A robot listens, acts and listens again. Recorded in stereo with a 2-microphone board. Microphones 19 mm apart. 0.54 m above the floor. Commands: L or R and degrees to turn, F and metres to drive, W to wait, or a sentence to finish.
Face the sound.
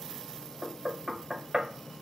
R35
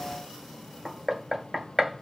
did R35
Found it: knocking, straight ahead.